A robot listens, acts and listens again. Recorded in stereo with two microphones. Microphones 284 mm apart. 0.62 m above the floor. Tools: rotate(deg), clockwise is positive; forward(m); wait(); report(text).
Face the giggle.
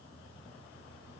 wait()
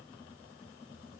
wait()
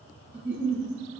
rotate(40)
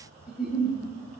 report("Facing the giggle, 2 to 4 m away.")